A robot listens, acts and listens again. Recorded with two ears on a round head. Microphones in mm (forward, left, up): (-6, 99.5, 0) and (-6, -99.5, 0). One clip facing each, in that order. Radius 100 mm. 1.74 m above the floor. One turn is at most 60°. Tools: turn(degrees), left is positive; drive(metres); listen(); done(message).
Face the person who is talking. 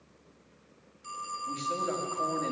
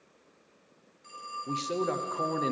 turn(degrees=-55)
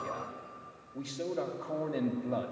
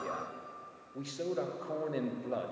done("Facing the man speaking.")